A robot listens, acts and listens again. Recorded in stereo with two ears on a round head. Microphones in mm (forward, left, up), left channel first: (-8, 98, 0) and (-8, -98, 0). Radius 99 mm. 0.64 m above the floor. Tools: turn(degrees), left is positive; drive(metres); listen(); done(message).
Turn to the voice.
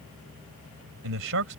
turn(degrees=-70)
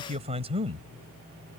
turn(degrees=-20)
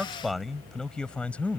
done("Facing the man speaking.")